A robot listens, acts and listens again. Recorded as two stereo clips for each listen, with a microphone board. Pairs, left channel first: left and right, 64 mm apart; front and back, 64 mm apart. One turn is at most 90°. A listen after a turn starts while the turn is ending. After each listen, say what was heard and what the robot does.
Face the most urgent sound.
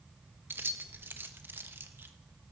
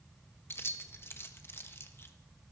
Keep listening.
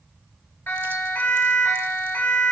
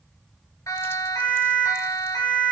The siren: 30° left. Turn 30° left.
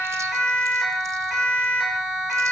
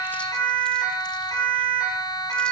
Facing the siren.